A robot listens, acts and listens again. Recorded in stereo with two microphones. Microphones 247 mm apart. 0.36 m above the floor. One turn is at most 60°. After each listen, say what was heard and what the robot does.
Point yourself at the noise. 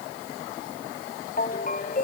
The ringtone: about 35° left or 145° left. Turn 35° left.
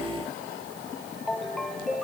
Facing the ringtone.